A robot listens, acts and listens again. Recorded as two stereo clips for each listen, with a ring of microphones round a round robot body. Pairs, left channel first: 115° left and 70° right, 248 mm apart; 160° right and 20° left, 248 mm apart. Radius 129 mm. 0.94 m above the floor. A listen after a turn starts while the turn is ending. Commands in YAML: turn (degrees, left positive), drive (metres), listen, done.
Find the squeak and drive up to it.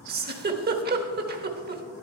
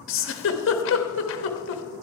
listen: true
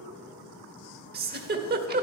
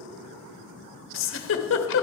listen: true
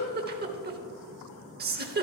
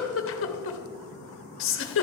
done: "I can't make out a squeak to turn to."